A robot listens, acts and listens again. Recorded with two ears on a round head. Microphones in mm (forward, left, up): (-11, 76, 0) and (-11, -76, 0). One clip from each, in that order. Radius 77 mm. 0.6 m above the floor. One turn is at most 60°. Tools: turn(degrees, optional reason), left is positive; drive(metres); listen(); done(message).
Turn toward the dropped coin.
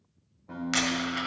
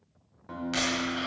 turn(degrees=35, reason="The dropped coin: about 35° left or 145° left.")
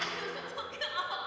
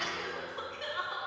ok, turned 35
done("Found it: a dropped coin, straight ahead.")